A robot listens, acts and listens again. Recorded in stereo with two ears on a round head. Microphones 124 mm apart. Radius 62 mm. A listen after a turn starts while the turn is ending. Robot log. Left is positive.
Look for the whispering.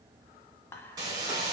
note: The whispering: about 15° left or 165° left.
cmd yaw +15
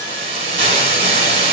cmd idle
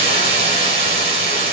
cmd idle
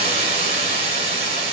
end: I heard whispering, but can't make it out now. It was about straight ahead or 150° left.